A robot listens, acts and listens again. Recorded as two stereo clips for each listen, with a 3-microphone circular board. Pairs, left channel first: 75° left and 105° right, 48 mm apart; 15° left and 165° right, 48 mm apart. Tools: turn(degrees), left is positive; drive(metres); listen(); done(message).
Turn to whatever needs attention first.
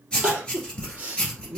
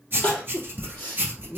turn(degrees=-40)
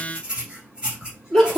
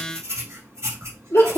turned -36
done("Facing the crying.")